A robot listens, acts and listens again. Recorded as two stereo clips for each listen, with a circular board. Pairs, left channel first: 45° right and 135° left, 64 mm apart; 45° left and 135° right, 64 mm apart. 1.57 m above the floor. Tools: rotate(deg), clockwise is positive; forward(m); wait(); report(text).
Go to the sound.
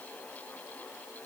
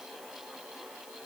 wait()
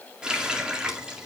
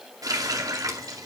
rotate(150)
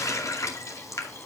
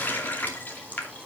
rotate(15)
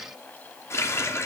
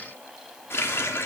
forward(1.0)
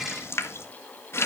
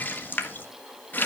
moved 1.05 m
forward(1.0)
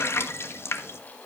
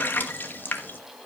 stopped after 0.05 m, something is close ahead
report("I am next to the running tap.")